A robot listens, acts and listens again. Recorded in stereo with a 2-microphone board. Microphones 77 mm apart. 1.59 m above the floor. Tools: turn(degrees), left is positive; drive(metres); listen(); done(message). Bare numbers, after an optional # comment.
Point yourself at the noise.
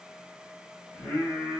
# The singing: about 20° left or 160° left.
turn(20)
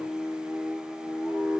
done("Found it: singing, straight ahead, 2 to 4 m away.")